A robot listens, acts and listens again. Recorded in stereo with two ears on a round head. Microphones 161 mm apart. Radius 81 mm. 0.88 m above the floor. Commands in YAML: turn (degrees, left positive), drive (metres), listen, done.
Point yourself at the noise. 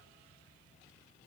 listen: true
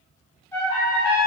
turn: 30
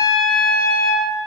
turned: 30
turn: 135
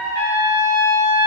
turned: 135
turn: 40
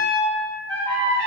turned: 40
turn: 10
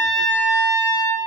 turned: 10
done: "Facing the trumpet."